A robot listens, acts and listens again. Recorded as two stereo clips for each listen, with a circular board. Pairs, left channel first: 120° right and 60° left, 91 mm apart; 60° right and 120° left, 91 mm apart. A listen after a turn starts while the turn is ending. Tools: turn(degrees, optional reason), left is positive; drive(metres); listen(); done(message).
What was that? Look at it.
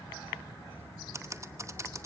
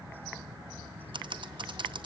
turn(degrees=110, reason="The typing on a keyboard: 110° left.")
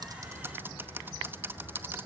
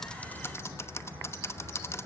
done("Facing the typing on a keyboard.")